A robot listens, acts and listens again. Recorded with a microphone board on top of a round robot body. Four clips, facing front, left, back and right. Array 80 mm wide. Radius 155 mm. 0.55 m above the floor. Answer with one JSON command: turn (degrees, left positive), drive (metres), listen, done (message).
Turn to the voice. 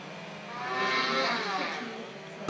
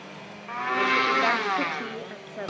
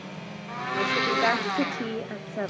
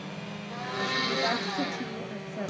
{"turn": 165}
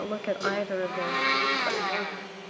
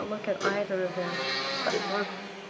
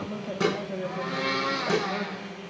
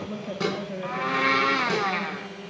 {"turn": 50}
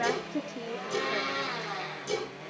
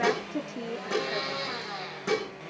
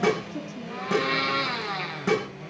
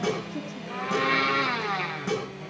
{"turn": 50}
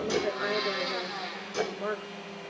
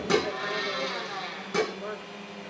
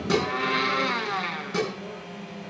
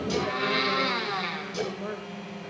{"done": "Found it: a woman speaking, straight ahead, 2 to 4 m away."}